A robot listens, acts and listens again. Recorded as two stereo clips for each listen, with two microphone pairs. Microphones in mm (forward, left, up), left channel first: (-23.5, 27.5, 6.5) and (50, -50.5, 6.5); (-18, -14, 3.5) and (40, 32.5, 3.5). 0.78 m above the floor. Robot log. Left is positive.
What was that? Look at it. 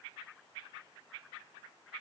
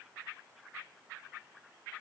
cmd idle
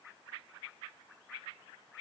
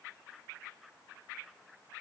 cmd idle
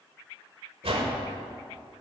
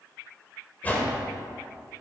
note: The whoosh: 75° right.
cmd yaw -75
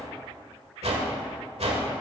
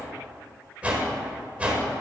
note: The whoosh is now 30° right.
cmd yaw -30
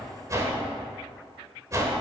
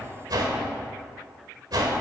note: The whoosh is now 10° left.
cmd yaw +10
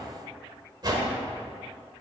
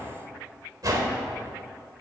end: Facing the whoosh, 1 to 2 m away.